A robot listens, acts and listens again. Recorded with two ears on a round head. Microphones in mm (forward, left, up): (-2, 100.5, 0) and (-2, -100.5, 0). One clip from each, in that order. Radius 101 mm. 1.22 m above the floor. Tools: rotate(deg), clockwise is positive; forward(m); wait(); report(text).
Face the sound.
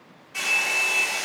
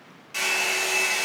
rotate(60)
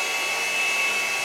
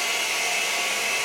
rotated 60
rotate(55)
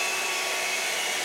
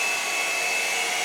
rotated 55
rotate(-15)
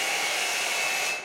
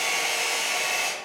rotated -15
report("Found it: a hair dryer, straight ahead.")